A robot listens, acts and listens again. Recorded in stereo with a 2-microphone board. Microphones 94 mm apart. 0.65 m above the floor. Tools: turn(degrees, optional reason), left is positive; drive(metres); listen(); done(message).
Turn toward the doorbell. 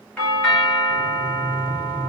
turn(degrees=30)
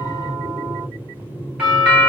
turn(degrees=-15, reason="So it is at 15° right.")
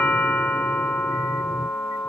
done("Facing the doorbell.")